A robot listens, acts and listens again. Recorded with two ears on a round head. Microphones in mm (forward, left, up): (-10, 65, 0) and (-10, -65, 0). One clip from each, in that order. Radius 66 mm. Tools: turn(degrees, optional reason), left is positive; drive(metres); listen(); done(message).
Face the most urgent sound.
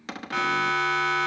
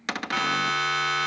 turn(degrees=-25, reason="The siren: about 25° right or 155° right.")
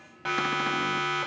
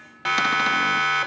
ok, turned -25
turn(degrees=-130, reason="So it is at 130° right.")
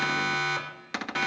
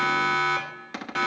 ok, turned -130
done("Found it: a siren, straight ahead.")